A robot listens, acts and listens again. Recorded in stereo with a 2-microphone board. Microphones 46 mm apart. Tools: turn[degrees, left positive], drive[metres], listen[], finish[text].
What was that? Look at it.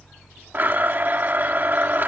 Thought: The blender: about 45° right or 135° right.
Action: turn[-45]
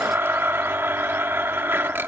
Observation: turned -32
Thought: So it is at 90° right.
Action: turn[-90]
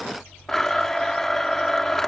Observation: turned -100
Thought: The blender is now 10° left.
Action: turn[10]
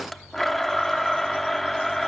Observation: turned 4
Action: finish[Found it: a blender, straight ahead, under 1 m away.]